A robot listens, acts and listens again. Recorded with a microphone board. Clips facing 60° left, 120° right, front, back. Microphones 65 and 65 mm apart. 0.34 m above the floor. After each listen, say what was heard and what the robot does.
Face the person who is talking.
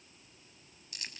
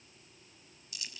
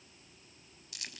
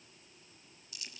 Keep listening.
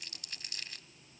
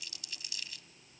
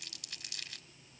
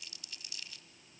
Keep listening.
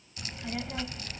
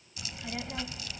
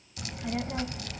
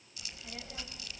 The child speaking: 25° right. Turn 25° right.
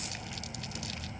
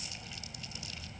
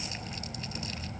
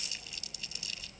Facing the child speaking, under 1 m away.